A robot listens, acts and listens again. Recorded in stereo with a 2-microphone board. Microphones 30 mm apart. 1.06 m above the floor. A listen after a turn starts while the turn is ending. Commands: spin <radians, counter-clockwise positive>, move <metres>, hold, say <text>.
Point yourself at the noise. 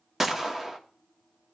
spin -0.52
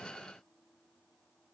hold
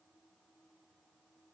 say I heard a gunshot, but can't make it out now. It was about 15° left or 135° right.